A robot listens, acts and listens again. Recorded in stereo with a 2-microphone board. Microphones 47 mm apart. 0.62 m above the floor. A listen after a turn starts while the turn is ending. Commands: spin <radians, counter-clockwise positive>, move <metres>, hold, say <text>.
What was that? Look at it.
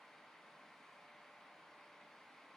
hold
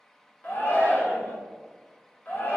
spin 0.79
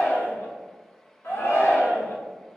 spin 1.48
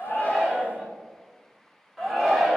say Found it: a shout, straight ahead.